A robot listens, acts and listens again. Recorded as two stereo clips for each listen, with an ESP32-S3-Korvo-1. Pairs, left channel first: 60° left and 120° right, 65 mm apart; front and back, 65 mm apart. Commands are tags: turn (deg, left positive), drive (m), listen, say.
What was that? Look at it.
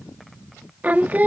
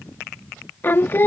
<turn deg="-60"/>
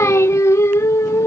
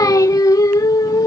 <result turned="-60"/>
<turn deg="20"/>
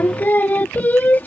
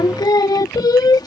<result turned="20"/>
<say>Facing the singing.</say>